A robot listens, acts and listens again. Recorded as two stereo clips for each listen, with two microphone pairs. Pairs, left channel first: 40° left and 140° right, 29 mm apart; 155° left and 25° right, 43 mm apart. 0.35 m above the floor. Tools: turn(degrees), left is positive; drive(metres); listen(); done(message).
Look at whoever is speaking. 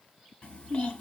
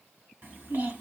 done("Facing the child speaking, 2 to 4 m away.")